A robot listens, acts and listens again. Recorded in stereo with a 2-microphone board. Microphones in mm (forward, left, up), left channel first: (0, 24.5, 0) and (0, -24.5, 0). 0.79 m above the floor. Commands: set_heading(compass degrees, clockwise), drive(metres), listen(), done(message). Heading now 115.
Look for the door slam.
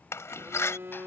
set_heading(50)
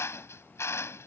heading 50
listen()
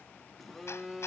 done("I heard a door slam, but can't make it out now. It was about straight ahead or 50° left.")